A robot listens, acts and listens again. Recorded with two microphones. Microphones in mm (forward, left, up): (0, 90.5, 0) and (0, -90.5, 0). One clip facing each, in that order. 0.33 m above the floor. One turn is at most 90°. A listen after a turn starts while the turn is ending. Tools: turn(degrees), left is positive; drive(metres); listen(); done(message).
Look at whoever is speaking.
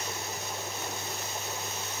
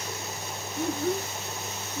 turn(degrees=-60)
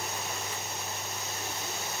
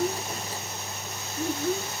turn(degrees=-60)
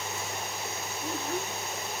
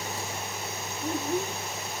turn(degrees=-15)
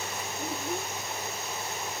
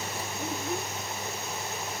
done("Facing the child speaking.")